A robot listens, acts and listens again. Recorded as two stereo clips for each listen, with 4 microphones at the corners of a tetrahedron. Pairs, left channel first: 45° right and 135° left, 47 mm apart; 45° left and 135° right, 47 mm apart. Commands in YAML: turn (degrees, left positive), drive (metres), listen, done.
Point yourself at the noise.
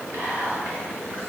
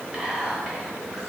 turn: 150
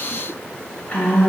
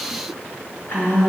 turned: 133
turn: 15
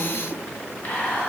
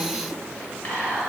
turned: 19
done: "Facing the whispering, 1 to 2 m away."